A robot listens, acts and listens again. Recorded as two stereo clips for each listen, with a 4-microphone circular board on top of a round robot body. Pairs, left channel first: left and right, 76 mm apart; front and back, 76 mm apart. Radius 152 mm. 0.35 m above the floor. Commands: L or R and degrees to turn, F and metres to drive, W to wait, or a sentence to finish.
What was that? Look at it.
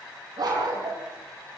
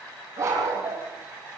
R125
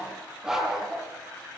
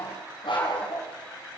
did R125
Facing the dog barking.